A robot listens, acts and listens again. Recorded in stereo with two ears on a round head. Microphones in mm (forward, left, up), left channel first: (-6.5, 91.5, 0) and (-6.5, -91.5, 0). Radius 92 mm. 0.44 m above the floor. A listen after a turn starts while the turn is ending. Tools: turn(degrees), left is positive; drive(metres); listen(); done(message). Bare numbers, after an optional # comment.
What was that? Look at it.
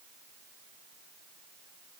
listen()
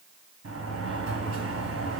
# The sliding door: about 65° right or 115° right.
turn(-65)
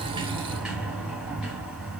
done("Facing the sliding door.")